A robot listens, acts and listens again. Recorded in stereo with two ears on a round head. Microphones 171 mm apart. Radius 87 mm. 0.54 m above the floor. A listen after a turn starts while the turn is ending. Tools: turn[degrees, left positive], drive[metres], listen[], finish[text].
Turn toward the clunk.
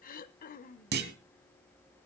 Thought: The clunk: about 60° right or 120° right.
Action: turn[-60]
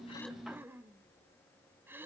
Action: listen[]
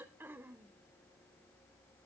Action: finish[I heard a clunk, but can't make it out now. It was about straight ahead or 60° right.]